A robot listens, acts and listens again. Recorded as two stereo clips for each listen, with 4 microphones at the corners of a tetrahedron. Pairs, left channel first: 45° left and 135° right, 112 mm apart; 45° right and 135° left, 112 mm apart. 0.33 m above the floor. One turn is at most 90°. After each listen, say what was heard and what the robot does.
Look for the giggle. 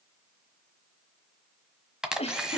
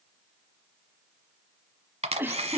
The giggle: 65° left. Turn 65° left.
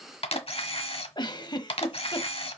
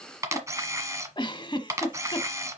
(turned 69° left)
Facing the giggle.